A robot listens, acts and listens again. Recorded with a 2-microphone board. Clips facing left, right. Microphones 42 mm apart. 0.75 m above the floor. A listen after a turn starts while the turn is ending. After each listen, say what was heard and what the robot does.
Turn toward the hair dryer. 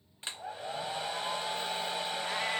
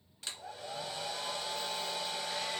The hair dryer: about 25° left or 155° left. Turn 25° left.
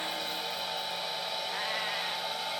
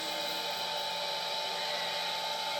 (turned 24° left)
Found it: a hair dryer, straight ahead, under 1 m away.